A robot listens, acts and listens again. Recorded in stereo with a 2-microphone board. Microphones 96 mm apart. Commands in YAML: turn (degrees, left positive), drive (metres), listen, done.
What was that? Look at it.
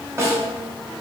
turn: -30
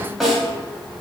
done: "Facing the snare drum."